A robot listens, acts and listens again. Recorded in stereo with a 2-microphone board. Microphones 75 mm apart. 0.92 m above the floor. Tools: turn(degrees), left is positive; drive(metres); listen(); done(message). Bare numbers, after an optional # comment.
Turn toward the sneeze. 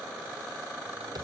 listen()
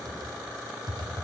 listen()
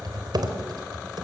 done("I can't make out a sneeze, only typing on a keyboard.")